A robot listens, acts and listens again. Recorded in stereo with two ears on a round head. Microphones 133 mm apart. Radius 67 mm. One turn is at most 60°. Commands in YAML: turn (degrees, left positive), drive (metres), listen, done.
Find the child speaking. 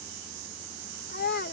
turn: 60
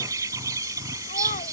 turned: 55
turn: 35
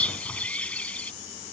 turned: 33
listen: true
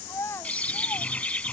turn: 15
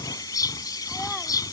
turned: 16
listen: true
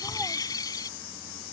listen: true
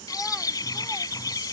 done: "I heard a child speaking from this way, but can't make it out now."